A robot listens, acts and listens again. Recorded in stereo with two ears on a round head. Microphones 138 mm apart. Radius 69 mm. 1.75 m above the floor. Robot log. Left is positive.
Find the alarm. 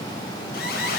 note: The alarm: about 65° left or 115° left.
cmd yaw +65
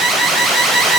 end: Found it: an alarm, straight ahead.